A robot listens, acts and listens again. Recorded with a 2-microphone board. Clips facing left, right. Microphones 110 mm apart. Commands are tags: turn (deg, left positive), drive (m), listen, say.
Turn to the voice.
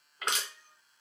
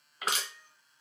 <listen/>
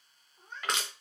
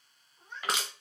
<listen/>
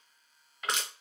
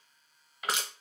<say>I can't make out anyone speaking, only crushing and a cat meowing.</say>